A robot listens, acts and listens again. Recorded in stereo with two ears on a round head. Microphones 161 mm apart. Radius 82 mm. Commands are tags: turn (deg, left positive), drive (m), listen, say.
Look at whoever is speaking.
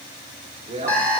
<turn deg="-40"/>
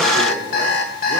<listen/>
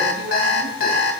<listen/>
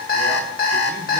<say>I heard a man speaking, but can't make it out now. It was about straight ahead or 100° right.</say>